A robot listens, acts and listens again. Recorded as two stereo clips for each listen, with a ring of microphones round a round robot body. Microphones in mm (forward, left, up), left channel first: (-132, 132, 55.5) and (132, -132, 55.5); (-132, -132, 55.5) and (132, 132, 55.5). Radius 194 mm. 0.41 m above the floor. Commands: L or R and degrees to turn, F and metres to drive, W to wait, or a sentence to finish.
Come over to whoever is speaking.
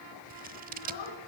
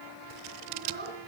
L110
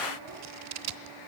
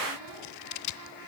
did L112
W
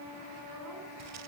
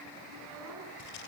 W
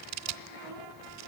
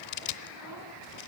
Facing where the child speaking came from. I can't hear it now. I did not reach it.